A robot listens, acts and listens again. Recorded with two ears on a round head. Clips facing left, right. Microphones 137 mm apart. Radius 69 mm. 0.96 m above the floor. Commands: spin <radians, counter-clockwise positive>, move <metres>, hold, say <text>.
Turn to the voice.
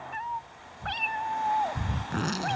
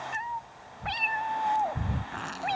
hold
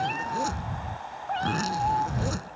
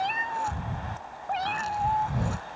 hold
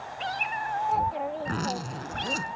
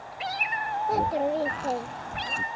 spin -0.79
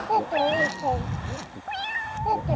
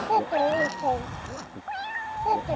say Found it: a child speaking, straight ahead.